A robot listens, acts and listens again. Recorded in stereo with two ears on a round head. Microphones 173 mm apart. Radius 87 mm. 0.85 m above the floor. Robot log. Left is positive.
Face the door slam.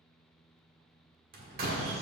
note: The door slam: about 45° right or 135° right.
cmd yaw -45
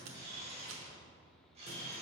cmd idle
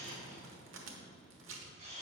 end: I heard a door slam, but can't make it out now. It was about straight ahead or 90° right.